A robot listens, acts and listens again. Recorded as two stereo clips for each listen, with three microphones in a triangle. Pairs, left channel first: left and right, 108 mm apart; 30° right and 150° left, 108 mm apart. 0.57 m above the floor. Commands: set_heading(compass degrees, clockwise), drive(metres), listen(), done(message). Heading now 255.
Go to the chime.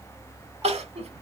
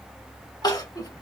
listen()
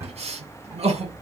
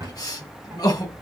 listen()
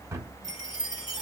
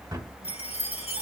set_heading(295)
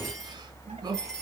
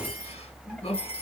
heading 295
listen()
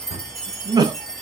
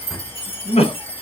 drive(1.0)
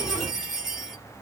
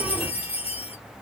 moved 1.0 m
drive(1.0)
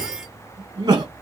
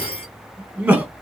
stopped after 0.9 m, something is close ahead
listen()
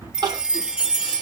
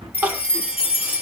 set_heading(305)
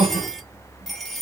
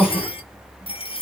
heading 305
done("Arrived at the chime, straight ahead.")